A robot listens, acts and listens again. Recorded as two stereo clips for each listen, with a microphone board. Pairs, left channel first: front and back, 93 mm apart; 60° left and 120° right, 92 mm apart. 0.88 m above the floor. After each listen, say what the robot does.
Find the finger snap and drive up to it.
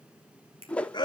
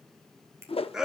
Turn 180° left.
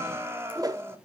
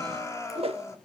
Keep listening.
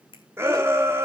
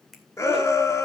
Turn 30° right.
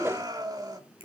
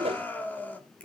Keep listening.
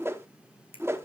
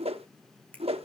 Turn 15° right.
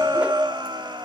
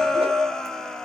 Keep listening.
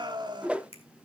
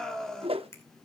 Drive 1.0 m forward.
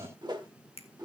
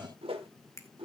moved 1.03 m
Drive 1.0 m forward.
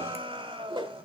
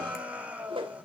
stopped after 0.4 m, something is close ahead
Keep listening.
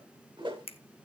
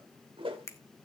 I am next to the finger snap.